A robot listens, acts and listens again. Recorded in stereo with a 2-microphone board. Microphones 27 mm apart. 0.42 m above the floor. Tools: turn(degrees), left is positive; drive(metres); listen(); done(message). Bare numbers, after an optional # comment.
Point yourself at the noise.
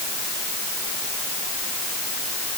listen()
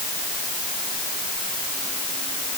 listen()
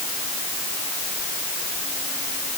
done("I can't make out anything to turn to.")